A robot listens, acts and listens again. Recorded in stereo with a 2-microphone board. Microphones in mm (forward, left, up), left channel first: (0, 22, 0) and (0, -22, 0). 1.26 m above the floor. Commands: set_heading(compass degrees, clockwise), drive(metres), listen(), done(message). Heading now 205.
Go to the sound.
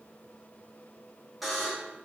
set_heading(235)
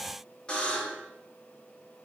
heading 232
set_heading(207)
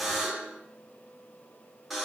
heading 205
drive(1.0)
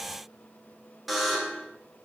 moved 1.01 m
drive(1.0)
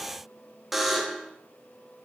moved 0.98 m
drive(1.0)
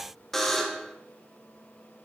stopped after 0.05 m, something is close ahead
done("I am next to the buzzer.")